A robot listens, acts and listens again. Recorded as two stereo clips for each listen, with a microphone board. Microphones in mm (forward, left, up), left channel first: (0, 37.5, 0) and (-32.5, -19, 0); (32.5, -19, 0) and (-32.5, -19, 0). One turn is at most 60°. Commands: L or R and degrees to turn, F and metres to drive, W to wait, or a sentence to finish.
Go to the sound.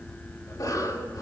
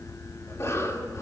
L40
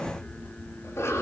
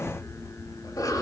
L15
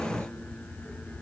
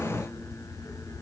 W
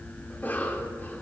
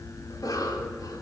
F1.0
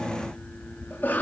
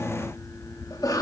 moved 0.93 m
F1.0
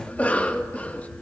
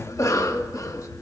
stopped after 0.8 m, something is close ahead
I am next to the cough.